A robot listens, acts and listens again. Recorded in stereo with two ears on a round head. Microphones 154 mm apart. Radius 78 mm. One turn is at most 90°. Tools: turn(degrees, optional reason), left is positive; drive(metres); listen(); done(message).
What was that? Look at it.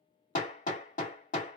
turn(degrees=50, reason="The hammering: about 50° left or 130° left.")
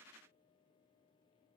listen()
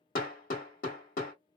turn(degrees=70, reason="So it is at 70° left.")
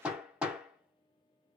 done("Facing the hammering, 1 to 2 m away.")